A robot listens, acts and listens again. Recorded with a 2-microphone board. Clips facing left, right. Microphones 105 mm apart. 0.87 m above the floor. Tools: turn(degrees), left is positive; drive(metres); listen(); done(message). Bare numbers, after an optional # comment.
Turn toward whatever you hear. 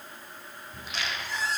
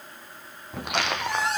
# The squeak: about 70° right or 110° right.
turn(-70)
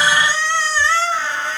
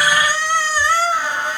# So it is at 15° right.
turn(-15)
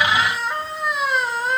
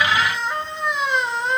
done("Found it: a squeak, straight ahead, 2 to 4 m away.")